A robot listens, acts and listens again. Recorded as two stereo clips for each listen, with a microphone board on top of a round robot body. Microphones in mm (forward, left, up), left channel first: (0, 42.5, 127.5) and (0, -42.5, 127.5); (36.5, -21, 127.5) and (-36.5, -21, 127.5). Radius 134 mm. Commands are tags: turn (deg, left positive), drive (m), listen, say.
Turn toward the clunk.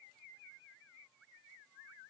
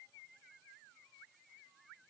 <listen/>
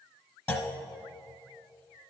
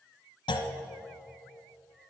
<turn deg="20"/>
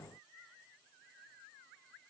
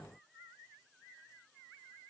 <say>I heard a clunk from this way, but can't make it out now.</say>